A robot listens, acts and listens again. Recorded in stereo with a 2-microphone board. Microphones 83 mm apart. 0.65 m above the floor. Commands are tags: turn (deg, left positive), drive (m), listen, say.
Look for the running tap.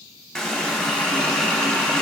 <turn deg="30"/>
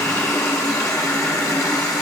<turn deg="140"/>
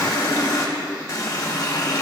<turn deg="45"/>
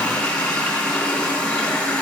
<turn deg="15"/>
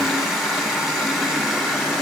<say>Found it: a running tap, straight ahead, under 1 m away.</say>